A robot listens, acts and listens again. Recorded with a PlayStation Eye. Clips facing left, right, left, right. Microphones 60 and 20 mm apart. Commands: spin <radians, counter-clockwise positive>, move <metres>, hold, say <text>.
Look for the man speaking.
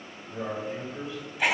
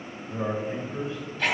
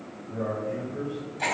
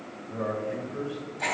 spin -0.52
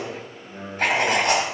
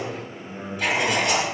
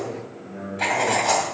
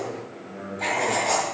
say Facing the man speaking, 2 to 4 m away.